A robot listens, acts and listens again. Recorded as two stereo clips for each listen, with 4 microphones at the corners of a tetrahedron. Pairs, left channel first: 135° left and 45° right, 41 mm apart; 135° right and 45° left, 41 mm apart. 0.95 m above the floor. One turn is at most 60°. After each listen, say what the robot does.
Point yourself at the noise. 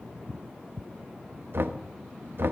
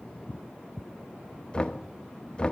Turn 60° right.
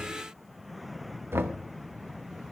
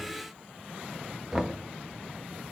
Turn 25° right.
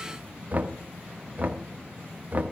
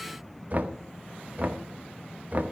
Found it: knocking, straight ahead.